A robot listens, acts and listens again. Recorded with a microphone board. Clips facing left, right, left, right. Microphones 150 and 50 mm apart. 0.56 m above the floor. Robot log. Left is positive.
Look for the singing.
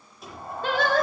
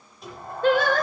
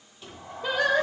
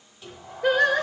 note: The singing: about 50° right or 130° right.
cmd yaw -50
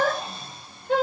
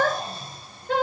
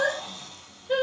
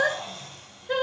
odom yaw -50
note: So it is at 80° right.
cmd yaw -80
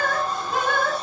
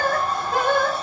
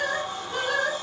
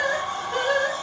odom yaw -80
note: The singing is now 35° right.
cmd yaw -35
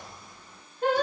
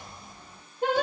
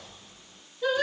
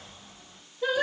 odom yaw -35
note: The singing is now 15° right.
cmd yaw -15
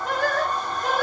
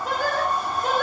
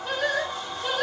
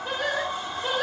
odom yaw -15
end: Facing the singing, 2 to 4 m away.